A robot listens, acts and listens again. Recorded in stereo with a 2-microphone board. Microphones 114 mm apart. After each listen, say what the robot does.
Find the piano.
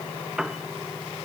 Turn 30° right.
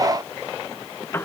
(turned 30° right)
Turn 20° left.
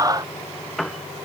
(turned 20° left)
Facing the piano.